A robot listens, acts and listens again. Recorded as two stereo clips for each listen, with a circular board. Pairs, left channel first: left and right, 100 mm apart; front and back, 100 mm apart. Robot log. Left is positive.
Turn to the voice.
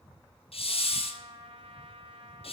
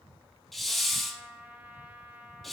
cmd idle
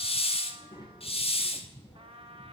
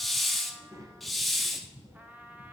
note: The child speaking: 130° left.
cmd yaw +130
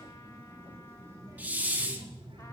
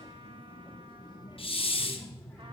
note: The child speaking is now 60° right.
cmd yaw -60
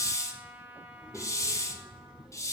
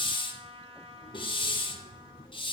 cmd idle
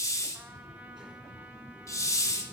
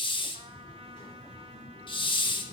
note: The child speaking is now 10° right.
cmd yaw -10
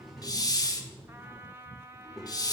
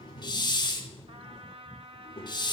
end: Found it: a child speaking, straight ahead, 1 to 2 m away.